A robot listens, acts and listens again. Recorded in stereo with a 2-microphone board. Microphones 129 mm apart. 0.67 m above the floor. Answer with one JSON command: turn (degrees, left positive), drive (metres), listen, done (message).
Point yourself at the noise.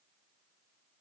{"listen": true}
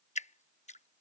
{"turn": 55}
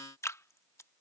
{"turn": 25}
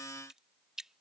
{"done": "Found it: dripping, straight ahead."}